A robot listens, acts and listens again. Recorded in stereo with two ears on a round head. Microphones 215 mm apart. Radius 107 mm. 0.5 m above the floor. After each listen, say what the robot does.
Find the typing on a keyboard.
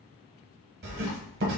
Keep listening.
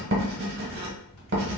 Keep listening.
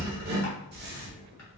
I can't make out typing on a keyboard to turn to.